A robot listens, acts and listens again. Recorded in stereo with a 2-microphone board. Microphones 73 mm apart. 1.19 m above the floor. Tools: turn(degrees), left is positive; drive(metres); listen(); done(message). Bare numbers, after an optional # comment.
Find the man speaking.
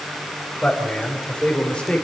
turn(30)
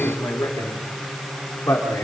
# So it is at 145° left.
turn(145)
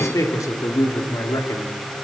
# The man speaking is now 55° left.
turn(55)
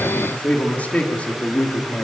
# The man speaking is now 20° left.
turn(20)
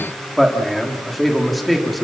done("Facing the man speaking.")